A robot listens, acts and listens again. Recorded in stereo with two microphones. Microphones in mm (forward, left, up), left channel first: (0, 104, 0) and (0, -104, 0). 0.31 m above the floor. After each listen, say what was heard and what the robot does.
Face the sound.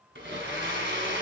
The blender: about 60° right or 120° right. Turn 60° right.
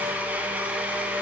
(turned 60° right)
So it is at 10° right. Turn 10° right.
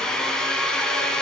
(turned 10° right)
Found it: a blender, straight ahead, 1 to 2 m away.